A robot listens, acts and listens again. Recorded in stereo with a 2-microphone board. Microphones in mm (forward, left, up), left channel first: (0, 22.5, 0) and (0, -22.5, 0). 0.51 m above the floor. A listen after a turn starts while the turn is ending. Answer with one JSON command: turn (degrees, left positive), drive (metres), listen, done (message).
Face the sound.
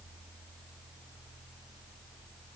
{"listen": true}
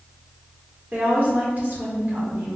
{"turn": -45}
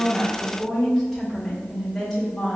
{"done": "Facing the woman speaking, 2 to 4 m away."}